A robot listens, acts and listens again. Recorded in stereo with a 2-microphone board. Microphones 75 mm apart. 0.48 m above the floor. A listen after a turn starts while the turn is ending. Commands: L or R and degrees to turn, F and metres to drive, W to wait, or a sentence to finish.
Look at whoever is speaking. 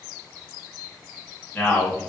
L20
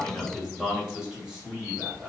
R15
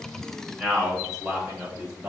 R15
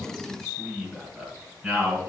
Facing the man speaking, 2 to 4 m away.